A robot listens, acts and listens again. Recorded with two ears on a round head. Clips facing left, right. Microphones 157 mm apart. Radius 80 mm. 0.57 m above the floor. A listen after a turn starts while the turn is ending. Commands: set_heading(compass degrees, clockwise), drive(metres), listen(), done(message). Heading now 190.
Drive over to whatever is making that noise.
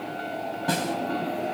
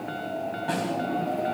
set_heading(135)
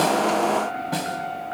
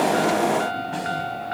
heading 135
set_heading(70)
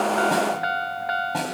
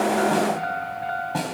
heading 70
drive(1.0)
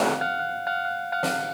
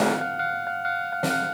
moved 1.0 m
drive(1.0)
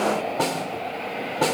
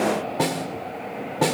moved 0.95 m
drive(1.0)
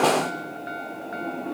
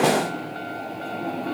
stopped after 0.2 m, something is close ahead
listen()
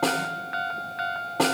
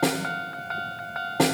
set_heading(80)
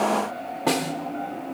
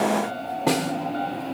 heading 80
done("I am next to the snare drum.")